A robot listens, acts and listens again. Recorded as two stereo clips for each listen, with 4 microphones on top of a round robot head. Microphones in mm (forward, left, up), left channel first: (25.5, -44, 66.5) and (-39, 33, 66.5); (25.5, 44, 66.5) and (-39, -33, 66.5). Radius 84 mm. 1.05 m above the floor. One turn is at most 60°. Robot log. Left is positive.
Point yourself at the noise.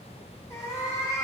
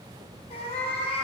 note: The cat meowing: 10° left.
cmd yaw +10
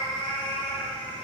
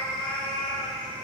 end: Found it: a cat meowing, straight ahead, 2 to 4 m away.